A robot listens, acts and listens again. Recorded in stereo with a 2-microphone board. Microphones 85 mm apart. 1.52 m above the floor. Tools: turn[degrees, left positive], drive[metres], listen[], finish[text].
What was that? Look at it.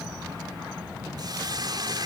Thought: The hiss: about 55° right or 125° right.
Action: turn[-55]
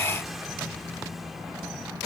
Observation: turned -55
Action: listen[]
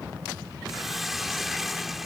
Action: finish[Found it: a hiss, straight ahead.]